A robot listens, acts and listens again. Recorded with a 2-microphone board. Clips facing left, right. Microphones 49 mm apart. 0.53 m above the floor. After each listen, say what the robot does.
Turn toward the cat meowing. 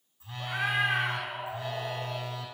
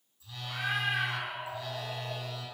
Turn 90° left.
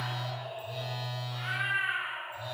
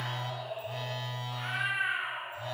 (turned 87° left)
Found it: a cat meowing, straight ahead, over 4 m away.